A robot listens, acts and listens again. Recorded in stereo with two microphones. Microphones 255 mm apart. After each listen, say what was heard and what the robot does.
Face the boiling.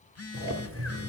The boiling: about 60° right or 120° right. Turn 60° right.
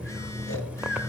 Found it: boiling, straight ahead.